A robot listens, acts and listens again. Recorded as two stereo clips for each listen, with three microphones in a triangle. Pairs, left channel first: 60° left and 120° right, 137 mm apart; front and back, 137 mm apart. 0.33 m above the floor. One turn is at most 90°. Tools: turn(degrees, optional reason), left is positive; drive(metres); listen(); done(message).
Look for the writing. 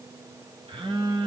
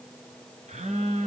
listen()
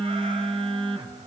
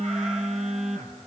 listen()
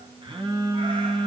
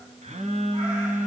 done("I can't make out writing to turn to.")